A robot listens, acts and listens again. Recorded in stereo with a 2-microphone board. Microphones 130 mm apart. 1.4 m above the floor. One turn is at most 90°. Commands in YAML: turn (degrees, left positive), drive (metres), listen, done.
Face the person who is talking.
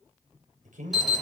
turn: -90
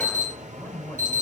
turn: 15
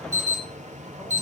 listen: true
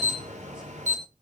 listen: true
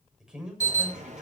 done: "Facing the man speaking."